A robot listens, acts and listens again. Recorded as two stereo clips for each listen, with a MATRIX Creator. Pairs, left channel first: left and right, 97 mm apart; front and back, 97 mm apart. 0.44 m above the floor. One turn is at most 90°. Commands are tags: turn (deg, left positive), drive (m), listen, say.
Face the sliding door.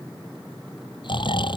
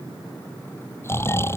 <listen/>
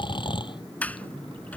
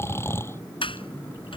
<turn deg="15"/>
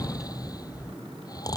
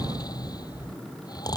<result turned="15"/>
<say>Facing the sliding door.</say>